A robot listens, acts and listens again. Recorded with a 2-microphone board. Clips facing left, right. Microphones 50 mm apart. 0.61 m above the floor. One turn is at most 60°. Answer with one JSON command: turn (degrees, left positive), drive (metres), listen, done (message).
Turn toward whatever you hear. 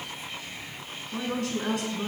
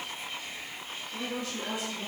{"turn": 60}
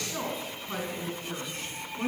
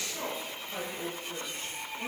{"turn": 55}
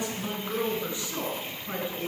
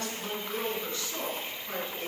{"turn": 20}
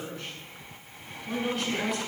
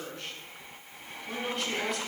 {"done": "Facing the woman speaking."}